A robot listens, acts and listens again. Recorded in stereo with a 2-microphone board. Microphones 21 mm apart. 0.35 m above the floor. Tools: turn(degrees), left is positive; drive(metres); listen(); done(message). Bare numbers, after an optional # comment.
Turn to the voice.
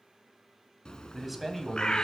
turn(30)
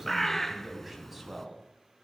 turn(-30)
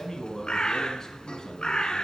# So it is at 30° left.
turn(30)
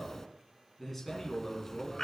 # The man speaking is now 10° left.
turn(10)
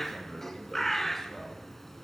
listen()
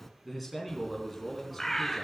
done("Facing the man speaking.")